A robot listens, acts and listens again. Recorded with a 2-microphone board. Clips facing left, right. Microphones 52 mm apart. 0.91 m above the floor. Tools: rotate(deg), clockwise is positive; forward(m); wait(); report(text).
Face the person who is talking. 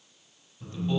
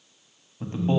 rotate(35)
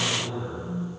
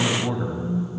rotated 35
rotate(100)
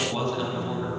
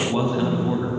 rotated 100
rotate(20)
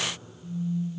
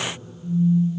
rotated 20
wait()
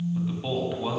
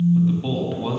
report("Found it: a man speaking, straight ahead.")